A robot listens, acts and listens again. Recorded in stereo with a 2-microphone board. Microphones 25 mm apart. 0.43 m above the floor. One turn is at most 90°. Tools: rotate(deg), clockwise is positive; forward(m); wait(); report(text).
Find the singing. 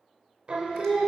rotate(45)
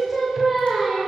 rotate(10)
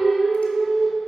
report("Found it: singing, straight ahead.")